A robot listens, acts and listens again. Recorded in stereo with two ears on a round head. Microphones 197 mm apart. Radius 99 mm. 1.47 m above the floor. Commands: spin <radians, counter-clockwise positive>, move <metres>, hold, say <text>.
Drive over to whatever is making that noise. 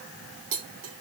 spin -1.05
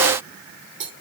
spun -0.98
spin -1.05
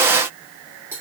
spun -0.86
spin -0.17
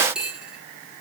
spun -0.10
move 1.0
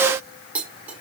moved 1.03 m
spin -0.17
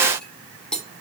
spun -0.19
move 1.0
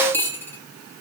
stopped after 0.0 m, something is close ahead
spin 0.17
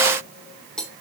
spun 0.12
say I am next to the cutlery clinking.